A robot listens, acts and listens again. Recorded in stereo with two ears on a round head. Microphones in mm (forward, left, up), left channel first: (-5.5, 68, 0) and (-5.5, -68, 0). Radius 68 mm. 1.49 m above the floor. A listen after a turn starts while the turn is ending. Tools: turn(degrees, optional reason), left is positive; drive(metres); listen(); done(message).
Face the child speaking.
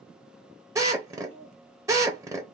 turn(degrees=-45, reason="The child speaking: about 45° right or 135° right.")
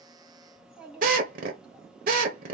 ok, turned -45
done("Facing the child speaking.")